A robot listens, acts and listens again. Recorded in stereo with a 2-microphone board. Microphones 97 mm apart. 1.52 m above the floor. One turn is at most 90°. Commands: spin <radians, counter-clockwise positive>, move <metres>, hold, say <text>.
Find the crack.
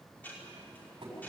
hold
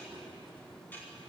hold
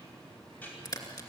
spin 0.79
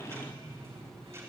hold
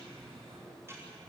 say I heard a crack, but can't make it out now. It was about straight ahead or 90° left.